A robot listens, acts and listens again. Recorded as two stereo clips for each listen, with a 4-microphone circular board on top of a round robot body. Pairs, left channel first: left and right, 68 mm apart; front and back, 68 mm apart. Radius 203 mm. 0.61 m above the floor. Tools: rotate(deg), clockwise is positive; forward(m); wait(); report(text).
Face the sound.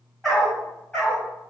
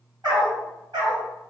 rotate(-165)
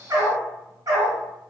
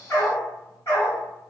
rotate(60)
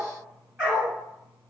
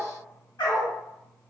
rotate(15)
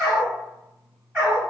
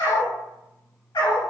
rotate(10)
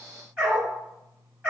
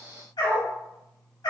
report("Found it: a dog barking, straight ahead.")